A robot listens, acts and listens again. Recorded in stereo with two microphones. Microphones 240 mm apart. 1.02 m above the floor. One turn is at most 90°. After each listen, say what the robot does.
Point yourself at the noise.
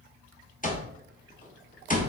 Turn 35° left.
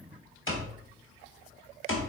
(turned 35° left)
Turn 90° left.
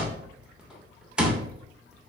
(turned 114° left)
Facing the alarm clock.